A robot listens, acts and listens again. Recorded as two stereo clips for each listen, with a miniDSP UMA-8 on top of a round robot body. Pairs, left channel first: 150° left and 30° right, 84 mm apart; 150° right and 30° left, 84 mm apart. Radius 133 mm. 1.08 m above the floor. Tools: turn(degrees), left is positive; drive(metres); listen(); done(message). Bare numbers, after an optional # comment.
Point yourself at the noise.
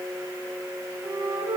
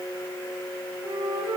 done("Found it: a flute, straight ahead, over 4 m away.")